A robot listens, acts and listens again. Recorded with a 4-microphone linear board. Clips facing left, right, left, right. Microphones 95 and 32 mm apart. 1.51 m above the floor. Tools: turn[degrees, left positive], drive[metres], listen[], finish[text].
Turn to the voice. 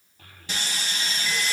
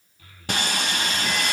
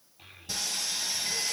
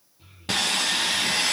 Thought: The child speaking: about 50° left or 130° left.
Action: turn[50]
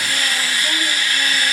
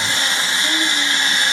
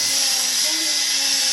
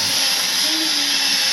Action: listen[]
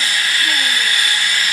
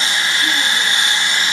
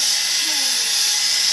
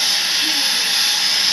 Action: listen[]
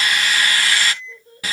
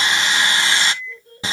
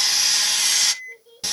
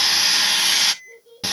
Action: finish[Found it: a child speaking, straight ahead, over 4 m away.]